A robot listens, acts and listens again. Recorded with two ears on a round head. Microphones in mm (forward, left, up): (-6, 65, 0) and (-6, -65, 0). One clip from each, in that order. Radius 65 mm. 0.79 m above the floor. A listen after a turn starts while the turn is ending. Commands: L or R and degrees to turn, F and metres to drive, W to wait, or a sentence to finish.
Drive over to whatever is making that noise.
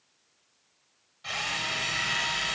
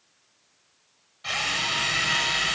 R30
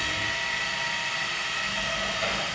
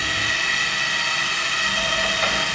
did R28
R145
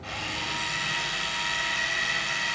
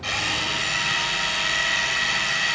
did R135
R10
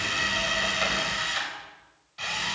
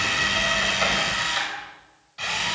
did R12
F1.0
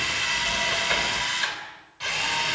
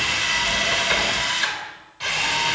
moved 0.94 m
F1.0
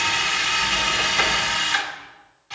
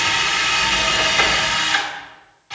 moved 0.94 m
F1.0
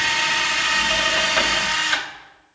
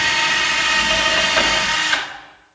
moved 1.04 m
L10
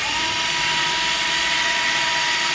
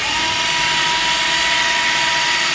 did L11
F1.0
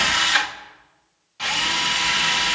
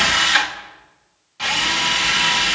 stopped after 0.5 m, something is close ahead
L10
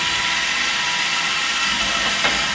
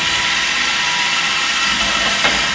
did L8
I am next to the drill.